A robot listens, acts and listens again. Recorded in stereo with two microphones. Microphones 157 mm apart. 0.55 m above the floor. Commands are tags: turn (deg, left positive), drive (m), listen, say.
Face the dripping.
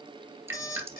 <turn deg="-15"/>
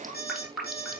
<say>Found it: dripping, straight ahead.</say>